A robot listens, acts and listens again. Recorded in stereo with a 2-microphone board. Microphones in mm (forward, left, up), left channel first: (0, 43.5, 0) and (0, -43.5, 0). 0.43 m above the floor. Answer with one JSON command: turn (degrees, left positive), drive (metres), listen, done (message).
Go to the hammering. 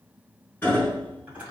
{"turn": 20}
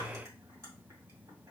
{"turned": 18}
{"listen": true}
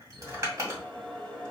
{"listen": true}
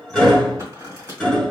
{"drive": 1.0}
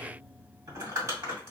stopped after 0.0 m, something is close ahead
{"listen": true}
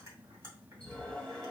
{"listen": true}
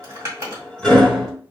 {"done": "Something is in my way. I am facing the hammering but have not reached it."}